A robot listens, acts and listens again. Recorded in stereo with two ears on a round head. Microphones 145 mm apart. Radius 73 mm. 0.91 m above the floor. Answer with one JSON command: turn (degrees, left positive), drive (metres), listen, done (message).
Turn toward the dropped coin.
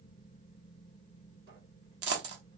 {"turn": -90}
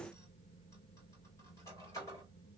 {"done": "Facing where the dropped coin came from. I can't hear it now."}